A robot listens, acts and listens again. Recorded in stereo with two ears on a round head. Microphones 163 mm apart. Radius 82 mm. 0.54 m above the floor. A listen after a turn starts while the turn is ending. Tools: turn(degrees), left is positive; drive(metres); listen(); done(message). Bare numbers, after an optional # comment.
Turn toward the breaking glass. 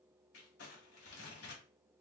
listen()
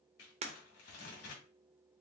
# The breaking glass: about 35° right or 145° right.
turn(-35)
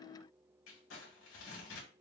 listen()
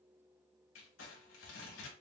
done("I heard breaking glass, but can't make it out now. It was about straight ahead or 110° right.")